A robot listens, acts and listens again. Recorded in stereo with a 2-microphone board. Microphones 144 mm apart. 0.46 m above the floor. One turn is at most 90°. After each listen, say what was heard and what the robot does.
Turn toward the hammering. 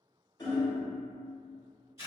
The hammering: about 30° left or 150° left. Turn 30° left.
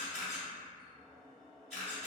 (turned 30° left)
Keep listening.
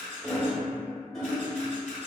Found it: hammering, straight ahead, under 1 m away.